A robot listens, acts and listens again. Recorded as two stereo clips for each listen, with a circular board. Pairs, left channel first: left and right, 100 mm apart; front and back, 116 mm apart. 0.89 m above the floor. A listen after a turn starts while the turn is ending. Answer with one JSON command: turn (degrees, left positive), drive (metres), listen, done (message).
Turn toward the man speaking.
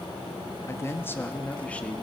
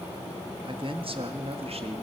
{"turn": 170}
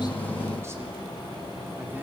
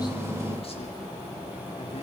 {"listen": true}
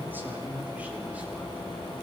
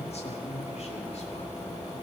{"turn": -15}
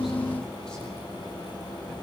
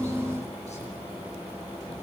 {"listen": true}
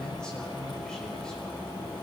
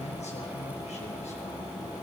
{"listen": true}
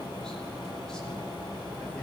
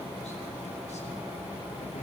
{"done": "Facing where the man speaking came from. I can't hear it now."}